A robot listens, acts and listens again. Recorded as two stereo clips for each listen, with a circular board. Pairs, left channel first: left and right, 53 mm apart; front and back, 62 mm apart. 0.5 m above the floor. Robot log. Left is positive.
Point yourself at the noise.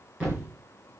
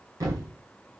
note: The thud: 155° right.
cmd yaw -155
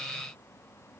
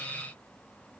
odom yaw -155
end: I heard a thud from this way, but can't make it out now.